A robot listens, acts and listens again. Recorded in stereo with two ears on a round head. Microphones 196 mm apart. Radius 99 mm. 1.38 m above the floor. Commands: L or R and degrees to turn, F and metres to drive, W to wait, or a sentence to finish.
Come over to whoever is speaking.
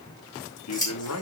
L90
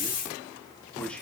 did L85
F1.0
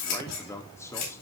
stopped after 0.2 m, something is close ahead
L15
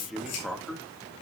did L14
Blocked. The man speaking is further on, straight ahead.